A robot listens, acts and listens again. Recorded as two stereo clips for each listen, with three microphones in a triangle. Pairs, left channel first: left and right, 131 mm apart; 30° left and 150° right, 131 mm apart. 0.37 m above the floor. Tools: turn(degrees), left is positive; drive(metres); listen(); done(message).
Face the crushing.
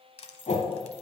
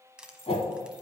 turn(degrees=130)
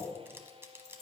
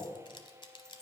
turn(degrees=-20)
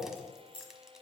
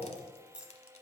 listen()
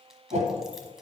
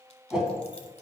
listen()
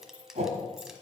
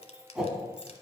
done("Found it: crushing, straight ahead.")